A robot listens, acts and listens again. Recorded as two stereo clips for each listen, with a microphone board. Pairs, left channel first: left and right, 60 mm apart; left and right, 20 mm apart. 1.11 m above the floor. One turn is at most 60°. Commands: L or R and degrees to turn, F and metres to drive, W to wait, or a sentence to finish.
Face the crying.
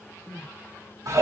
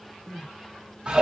L25
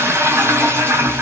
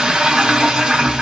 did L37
W
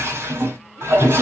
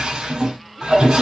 W
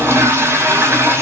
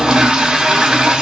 I heard crying, but can't make it out now. It was about 10° right or 120° left.